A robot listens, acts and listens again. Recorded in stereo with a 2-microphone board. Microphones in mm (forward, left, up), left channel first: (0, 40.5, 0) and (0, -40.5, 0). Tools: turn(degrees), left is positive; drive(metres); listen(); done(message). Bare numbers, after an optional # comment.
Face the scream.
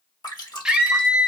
turn(-30)
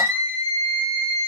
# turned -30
# So it is at 135° right.
turn(-135)
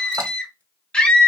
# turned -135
# The scream is now 15° left.
turn(15)
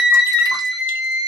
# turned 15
done("Found it: a scream, straight ahead.")